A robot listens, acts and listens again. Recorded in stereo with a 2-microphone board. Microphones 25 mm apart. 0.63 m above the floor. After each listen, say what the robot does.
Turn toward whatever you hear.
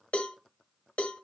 Turn 55° left.
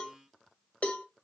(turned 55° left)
Turn 70° left.
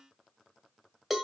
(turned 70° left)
Found it: a cowbell, straight ahead, 1 to 2 m away.